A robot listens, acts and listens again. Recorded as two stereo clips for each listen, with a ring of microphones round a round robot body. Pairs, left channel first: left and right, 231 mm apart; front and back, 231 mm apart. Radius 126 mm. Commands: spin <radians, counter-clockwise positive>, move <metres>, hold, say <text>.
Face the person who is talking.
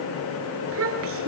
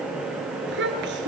spin -2.27
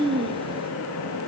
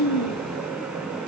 spin -0.35
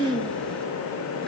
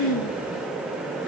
say Facing the child speaking.